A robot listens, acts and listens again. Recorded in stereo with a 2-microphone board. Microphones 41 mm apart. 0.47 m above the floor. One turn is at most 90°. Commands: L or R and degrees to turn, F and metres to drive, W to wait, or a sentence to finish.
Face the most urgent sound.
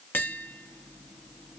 W
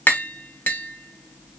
W
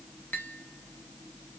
I can't make out anything urgent, only tapping.